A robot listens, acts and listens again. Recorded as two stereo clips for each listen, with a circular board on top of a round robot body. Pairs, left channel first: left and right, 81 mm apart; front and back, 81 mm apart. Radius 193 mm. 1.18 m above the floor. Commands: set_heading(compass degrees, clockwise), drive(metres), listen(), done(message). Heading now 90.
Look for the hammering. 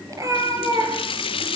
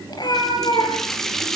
listen()
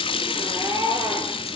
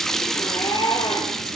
listen()
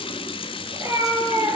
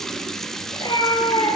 done("I can't make out hammering, only a running tap and a cat meowing.")